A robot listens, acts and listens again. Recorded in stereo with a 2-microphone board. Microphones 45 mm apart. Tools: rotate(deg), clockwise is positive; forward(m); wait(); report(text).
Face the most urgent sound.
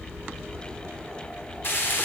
wait()
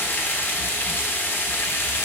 wait()
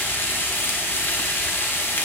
report("I can't make out anything urgent to turn to.")